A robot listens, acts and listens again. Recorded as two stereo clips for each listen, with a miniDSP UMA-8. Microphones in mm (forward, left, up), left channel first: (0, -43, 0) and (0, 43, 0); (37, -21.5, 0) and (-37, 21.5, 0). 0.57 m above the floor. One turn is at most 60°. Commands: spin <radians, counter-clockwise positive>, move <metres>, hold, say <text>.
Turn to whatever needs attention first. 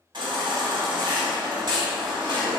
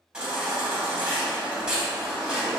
spin 1.05
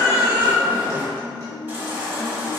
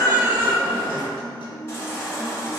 spin 0.44
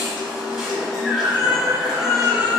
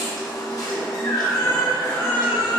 spin 0.17
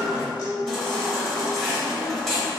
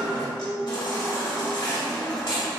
say Found it: a baby crying, straight ahead, 1 to 2 m away.